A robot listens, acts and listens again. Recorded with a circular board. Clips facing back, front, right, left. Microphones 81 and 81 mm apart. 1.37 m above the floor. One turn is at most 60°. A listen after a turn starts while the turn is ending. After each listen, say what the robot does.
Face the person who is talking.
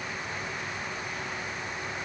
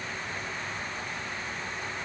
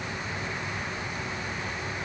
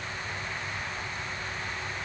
Keep listening.
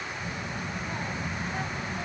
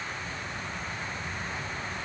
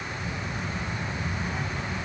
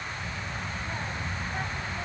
Turn 60° left.
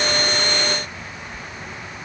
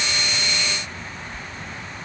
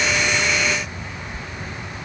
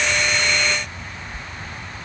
Turn 60° left.
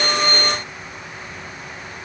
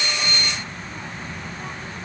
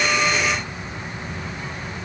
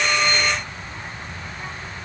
Turn 20° left.
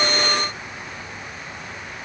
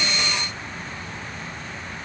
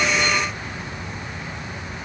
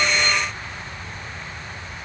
Keep listening.
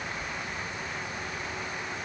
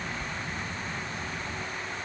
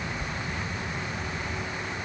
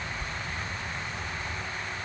Found it: a child speaking, straight ahead.